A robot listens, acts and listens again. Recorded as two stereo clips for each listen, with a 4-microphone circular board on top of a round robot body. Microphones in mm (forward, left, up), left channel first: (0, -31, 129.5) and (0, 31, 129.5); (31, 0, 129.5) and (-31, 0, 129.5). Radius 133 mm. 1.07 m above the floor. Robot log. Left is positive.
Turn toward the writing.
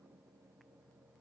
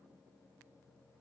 cmd idle
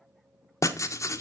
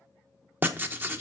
note: The writing: 125° right.
cmd yaw -125
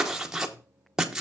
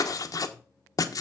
note: The writing is now 10° left.
cmd yaw +10
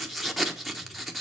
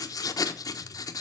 end: Facing the writing.